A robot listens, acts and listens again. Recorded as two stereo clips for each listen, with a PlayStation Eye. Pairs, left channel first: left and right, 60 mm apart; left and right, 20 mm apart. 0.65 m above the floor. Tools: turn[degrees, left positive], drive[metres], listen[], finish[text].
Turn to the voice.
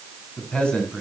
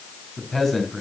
Thought: The man speaking: about 15° left or 165° left.
Action: turn[15]
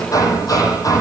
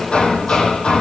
Action: listen[]
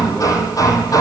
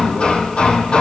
Action: listen[]
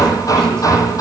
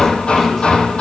Action: finish[I heard a man speaking, but can't make it out now. It was about straight ahead or 150° left.]